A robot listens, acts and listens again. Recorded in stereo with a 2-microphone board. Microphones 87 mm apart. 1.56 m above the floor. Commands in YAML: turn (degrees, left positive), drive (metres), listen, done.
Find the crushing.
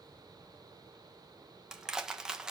turn: -30
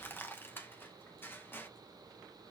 turn: 25
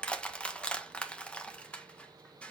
turn: 10
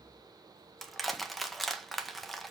done: "Facing the crushing."